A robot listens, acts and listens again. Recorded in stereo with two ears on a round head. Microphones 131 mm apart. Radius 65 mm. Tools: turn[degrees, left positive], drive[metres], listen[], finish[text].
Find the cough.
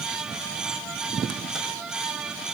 Action: listen[]
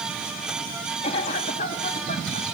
Thought: The cough: about 40° left or 140° left.
Action: turn[40]
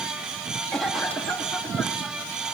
Action: finish[Found it: a cough, straight ahead.]